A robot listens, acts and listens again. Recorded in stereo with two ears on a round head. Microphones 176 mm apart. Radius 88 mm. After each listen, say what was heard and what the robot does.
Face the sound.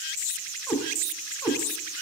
Turn 30° left.
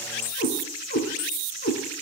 So it is at 135° left. Turn 135° left.
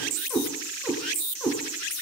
The cat meowing is now 10° left. Turn 10° left.
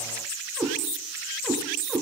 Facing the cat meowing, over 4 m away.